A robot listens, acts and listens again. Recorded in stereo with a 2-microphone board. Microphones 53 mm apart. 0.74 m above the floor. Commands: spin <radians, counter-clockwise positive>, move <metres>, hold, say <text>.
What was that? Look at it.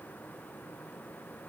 hold
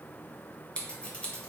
spin 0.35
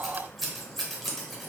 say Found it: scissors, straight ahead, under 1 m away.